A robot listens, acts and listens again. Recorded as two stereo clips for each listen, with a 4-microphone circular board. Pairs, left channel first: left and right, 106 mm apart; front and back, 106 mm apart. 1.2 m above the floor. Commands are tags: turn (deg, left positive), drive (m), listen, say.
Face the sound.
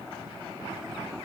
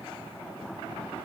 <listen/>
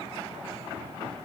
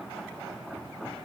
<listen/>
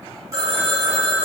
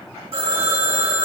<turn deg="-150"/>
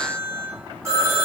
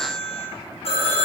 <turn deg="-25"/>
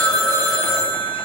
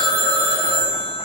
<turn deg="10"/>
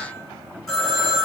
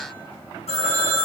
<say>Found it: a phone ringing, straight ahead.</say>